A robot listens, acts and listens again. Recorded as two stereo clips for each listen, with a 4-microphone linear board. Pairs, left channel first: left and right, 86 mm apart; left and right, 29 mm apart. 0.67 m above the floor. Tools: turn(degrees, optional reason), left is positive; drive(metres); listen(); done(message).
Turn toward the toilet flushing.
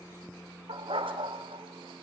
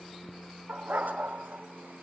listen()
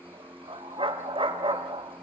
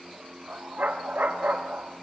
listen()
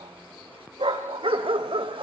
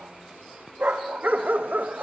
done("I can't make out a toilet flushing, only a dog barking.")